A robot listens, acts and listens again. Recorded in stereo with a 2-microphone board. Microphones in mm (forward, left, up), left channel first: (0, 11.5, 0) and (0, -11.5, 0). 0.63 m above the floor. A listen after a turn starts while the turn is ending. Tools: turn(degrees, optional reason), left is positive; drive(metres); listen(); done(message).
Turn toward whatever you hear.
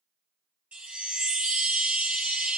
turn(degrees=-60, reason="The chime: about 60° right or 120° right.")
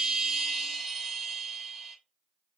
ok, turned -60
done("Found it: a chime, straight ahead.")